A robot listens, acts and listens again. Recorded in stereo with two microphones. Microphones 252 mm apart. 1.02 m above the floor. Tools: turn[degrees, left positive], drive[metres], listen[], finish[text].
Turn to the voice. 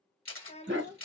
Thought: The child speaking: about 25° left or 155° left.
Action: turn[25]
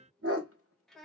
Action: finish[Found it: a child speaking, straight ahead, 1 to 2 m away.]